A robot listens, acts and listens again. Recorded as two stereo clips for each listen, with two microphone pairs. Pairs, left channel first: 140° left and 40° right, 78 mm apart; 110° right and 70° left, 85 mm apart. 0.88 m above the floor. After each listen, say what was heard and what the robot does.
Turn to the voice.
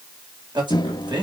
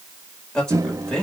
The man speaking: 25° right. Turn 25° right.
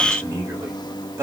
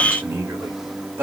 The man speaking is now 10° left. Turn 10° left.
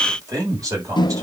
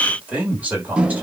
Found it: a man speaking, straight ahead.